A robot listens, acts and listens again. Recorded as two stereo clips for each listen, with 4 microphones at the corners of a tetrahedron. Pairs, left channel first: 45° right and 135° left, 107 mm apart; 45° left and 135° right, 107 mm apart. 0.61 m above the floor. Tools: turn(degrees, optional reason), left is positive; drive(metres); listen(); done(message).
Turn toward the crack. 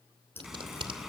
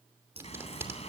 turn(degrees=-115, reason="The crack: 115° right.")
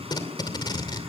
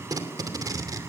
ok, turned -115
done("Facing where the crack came from. I can't hear it now.")